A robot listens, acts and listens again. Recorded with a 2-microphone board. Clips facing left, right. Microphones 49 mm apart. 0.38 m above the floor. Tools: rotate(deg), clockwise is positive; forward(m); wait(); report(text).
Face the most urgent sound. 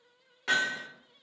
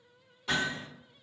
wait()
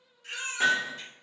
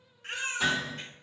rotate(45)
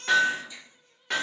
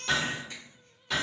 rotate(80)
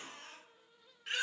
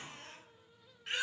report("Facing the baby crying.")